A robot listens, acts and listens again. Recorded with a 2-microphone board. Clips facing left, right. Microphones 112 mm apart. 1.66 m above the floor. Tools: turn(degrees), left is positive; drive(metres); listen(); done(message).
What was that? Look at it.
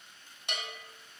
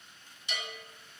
turn(degrees=55)
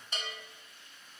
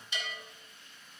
turn(degrees=50)
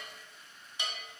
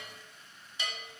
turn(degrees=20)
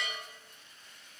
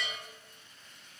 done("Facing the bell, 1 to 2 m away.")